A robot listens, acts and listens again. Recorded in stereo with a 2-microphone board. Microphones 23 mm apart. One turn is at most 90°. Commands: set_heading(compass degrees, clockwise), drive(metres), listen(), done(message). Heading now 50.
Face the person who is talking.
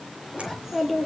set_heading(80)
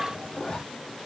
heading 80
set_heading(170)
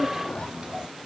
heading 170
set_heading(210)
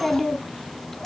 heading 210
set_heading(190)
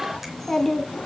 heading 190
set_heading(170)
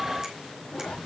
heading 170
set_heading(155)
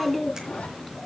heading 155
set_heading(145)
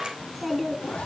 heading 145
done("Found it: a child speaking, straight ahead, 1 to 2 m away.")